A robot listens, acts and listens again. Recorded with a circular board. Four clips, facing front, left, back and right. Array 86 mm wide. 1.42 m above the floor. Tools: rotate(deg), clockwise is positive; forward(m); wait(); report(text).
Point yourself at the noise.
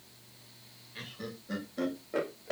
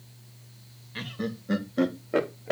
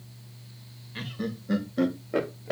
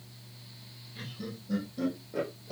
rotate(-100)
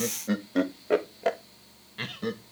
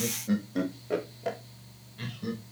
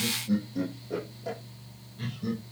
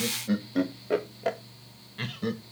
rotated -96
rotate(40)
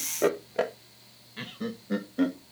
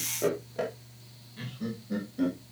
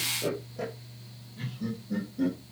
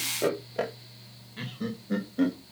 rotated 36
rotate(30)
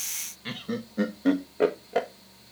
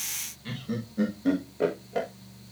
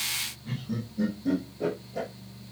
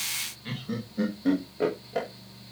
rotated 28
report("Facing the laughter, 1 to 2 m away.")